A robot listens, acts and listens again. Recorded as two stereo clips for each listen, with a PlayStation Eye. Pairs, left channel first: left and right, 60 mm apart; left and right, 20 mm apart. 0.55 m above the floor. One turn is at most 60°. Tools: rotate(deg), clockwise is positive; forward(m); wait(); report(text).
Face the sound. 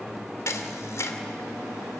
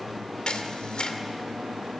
rotate(-55)
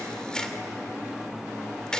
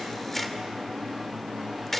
rotate(-15)
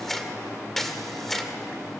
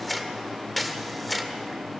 report("Found it: a camera shutter, straight ahead, 2 to 4 m away.")